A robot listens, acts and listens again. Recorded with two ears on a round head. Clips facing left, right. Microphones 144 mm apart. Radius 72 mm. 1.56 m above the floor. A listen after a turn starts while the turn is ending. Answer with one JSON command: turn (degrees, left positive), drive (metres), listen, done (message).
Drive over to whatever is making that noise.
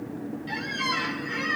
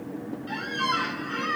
{"turn": 30}
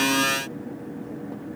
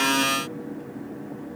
{"listen": true}
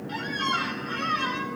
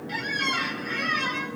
{"turn": -15}
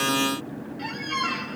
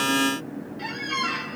{"drive": 1.0}
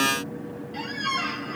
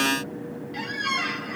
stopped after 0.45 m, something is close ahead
{"done": "Something is in my way. I am facing the squeak but have not reached it."}